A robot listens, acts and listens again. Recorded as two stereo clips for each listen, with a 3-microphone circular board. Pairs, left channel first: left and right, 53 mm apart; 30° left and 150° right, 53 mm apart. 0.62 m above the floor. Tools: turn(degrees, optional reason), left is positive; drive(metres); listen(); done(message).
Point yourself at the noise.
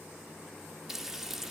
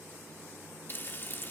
done("Found it: frying, straight ahead.")